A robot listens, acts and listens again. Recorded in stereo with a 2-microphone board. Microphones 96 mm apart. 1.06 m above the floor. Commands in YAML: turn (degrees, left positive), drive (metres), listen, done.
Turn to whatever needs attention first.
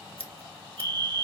turn: -60
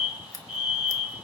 turn: -10
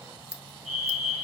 done: "Found it: a fire alarm, straight ahead."